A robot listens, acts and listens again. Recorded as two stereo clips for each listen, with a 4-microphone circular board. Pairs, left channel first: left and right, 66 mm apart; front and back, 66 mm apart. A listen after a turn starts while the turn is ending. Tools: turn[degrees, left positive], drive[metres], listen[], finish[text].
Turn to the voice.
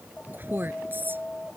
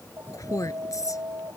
Thought: The woman speaking: 30° right.
Action: turn[-30]
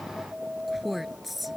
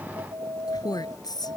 Action: finish[Found it: a woman speaking, straight ahead.]